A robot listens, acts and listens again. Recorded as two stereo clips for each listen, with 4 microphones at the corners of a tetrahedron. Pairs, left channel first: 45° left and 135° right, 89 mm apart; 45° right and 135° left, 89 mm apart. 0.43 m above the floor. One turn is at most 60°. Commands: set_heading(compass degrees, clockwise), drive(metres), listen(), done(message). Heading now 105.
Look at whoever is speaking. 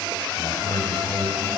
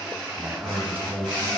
set_heading(45)
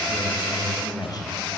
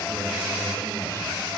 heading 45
set_heading(35)
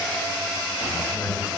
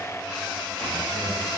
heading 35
done("Found it: a man speaking, straight ahead, 2 to 4 m away.")